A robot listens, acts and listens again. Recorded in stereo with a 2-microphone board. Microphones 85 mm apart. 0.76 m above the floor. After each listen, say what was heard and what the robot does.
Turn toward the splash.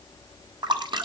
The splash: about 65° right or 115° right. Turn 65° right.
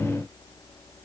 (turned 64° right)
Keep listening.
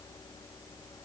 I heard a splash, but can't make it out now. It was about straight ahead or 50° right.